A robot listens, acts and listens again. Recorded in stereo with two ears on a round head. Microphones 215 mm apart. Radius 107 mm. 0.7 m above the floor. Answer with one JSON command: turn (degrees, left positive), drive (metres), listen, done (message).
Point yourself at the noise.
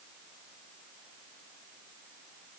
{"listen": true}
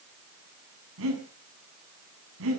{"turn": -60}
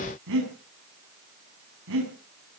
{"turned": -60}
{"turn": -60}
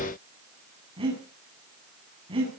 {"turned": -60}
{"turn": -25}
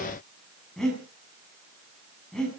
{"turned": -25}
{"done": "Facing the breathing."}